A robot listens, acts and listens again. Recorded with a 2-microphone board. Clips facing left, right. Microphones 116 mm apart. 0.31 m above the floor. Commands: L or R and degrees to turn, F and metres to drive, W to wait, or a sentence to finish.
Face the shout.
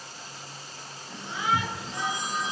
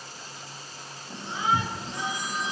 R30
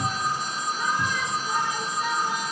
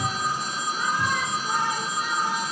R120
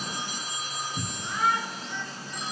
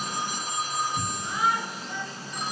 R10
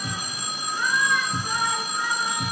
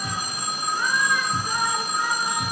Found it: a shout, straight ahead, over 4 m away.